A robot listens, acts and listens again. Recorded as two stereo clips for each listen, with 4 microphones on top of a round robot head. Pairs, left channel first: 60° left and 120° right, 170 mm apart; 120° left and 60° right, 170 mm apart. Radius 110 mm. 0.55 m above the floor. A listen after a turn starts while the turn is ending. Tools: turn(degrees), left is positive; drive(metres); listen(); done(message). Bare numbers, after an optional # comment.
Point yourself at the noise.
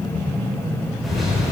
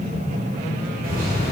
# The microwave: 30° right.
turn(-30)
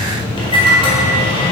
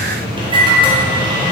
done("Facing the microwave.")